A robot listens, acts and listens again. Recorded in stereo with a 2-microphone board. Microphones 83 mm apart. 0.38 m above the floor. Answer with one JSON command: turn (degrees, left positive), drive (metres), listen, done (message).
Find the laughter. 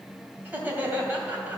{"turn": -20}
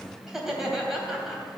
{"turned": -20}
{"done": "Found it: laughter, straight ahead, 2 to 4 m away."}